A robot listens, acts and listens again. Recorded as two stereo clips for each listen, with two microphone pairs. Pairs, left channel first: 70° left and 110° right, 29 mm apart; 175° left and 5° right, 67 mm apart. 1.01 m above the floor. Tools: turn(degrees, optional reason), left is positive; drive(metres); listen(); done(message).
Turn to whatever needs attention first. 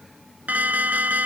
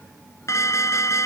turn(degrees=-140, reason="The alarm: 140° right.")
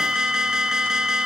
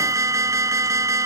turn(degrees=-45, reason="The alarm is now 45° right.")
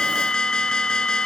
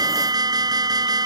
done("Found it: an alarm, straight ahead.")